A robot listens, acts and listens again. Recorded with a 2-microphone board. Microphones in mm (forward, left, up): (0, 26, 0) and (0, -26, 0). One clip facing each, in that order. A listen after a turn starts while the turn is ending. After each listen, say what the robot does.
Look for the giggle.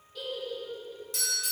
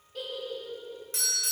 Turn 65° right.
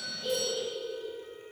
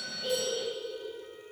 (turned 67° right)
Turn 35° right.
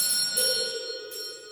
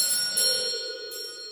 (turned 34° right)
Keep listening.
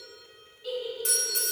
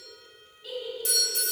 Facing the giggle.